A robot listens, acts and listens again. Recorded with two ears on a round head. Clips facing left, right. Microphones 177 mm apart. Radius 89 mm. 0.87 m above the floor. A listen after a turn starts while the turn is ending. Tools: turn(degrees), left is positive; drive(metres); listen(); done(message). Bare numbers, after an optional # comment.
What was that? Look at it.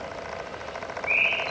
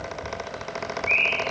turn(30)
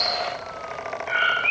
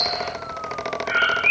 # So it is at 20° right.
turn(-20)
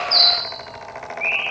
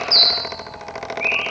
done("Found it: a bird, straight ahead.")